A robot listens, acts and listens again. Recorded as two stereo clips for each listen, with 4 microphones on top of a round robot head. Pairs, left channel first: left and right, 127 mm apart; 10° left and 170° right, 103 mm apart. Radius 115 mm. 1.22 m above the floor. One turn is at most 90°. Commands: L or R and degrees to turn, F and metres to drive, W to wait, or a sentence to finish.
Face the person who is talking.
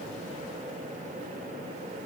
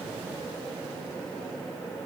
W
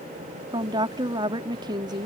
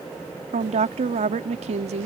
R90
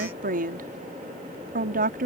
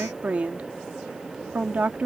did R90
R90
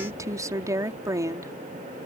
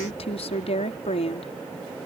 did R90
R25
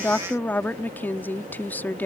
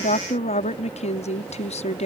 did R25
L15
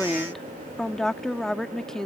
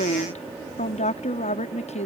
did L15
Found it: a woman speaking, straight ahead.